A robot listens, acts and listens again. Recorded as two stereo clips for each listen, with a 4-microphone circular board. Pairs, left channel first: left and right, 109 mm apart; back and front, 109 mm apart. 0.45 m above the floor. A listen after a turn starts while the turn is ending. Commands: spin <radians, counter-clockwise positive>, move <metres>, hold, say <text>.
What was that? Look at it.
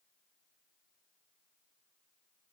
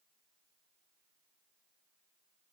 hold
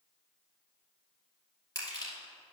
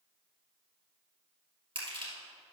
spin 0.61
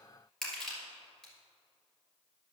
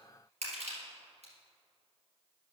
say Found it: crushing, straight ahead, 2 to 4 m away.